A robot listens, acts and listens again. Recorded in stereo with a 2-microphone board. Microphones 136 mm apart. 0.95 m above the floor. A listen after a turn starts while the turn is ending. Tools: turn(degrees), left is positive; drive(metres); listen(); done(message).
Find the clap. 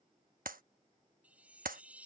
turn(degrees=-90)
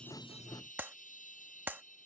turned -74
turn(degrees=-10)
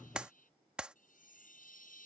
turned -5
done("Facing the clap.")